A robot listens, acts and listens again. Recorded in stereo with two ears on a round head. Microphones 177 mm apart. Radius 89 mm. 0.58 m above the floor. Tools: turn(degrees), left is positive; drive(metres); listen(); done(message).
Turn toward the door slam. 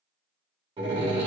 turn(degrees=-25)
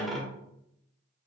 done("Found it: a door slam, straight ahead.")